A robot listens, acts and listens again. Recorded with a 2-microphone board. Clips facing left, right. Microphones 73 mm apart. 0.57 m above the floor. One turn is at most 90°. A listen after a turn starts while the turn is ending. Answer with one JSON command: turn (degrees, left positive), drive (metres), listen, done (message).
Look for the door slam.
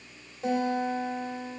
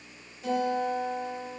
{"listen": true}
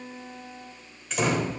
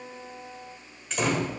{"turn": 30}
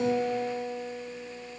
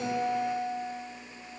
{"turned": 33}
{"listen": true}
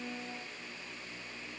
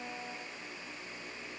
{"done": "I heard a door slam, but can't make it out now. It was about 30° right or 145° left."}